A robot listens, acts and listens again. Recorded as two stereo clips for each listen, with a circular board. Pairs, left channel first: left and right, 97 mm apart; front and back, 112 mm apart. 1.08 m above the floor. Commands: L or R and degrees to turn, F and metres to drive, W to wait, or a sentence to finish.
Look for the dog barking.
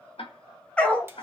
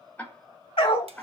L15
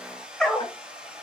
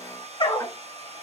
L10
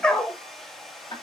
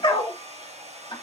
L15
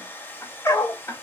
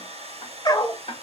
L45
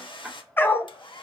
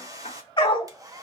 L30
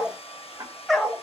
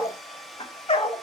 Found it: a dog barking, straight ahead, 1 to 2 m away.